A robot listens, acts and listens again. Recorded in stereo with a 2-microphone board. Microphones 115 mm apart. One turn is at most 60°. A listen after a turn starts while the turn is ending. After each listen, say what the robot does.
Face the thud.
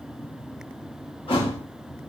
Turn 50° left.
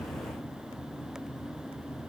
Keep listening.
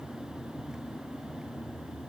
I heard a thud, but can't make it out now. It was about straight ahead or 80° left.